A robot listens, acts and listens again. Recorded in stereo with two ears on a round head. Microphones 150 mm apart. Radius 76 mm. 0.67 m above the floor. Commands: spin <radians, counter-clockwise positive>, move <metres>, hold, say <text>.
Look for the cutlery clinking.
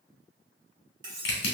spin -0.44
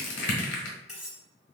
say Found it: cutlery clinking, straight ahead.